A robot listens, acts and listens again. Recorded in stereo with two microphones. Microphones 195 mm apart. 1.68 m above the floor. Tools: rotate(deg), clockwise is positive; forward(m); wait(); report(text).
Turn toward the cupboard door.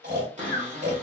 rotate(40)
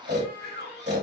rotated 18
rotate(125)
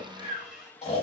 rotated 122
report("Facing the cupboard door, 1 to 2 m away.")